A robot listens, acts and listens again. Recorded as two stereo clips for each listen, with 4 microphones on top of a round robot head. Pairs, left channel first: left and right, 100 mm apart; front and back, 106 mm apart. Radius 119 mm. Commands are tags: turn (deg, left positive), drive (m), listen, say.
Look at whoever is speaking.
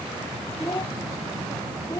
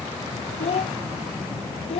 <turn deg="25"/>
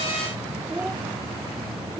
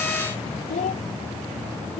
<say>Facing the child speaking.</say>